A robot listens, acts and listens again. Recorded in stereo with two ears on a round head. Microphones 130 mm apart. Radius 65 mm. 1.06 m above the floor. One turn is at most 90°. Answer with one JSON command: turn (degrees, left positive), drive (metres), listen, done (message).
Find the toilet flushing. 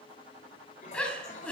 {"turn": 55}
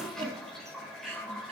{"done": "Found it: a toilet flushing, straight ahead."}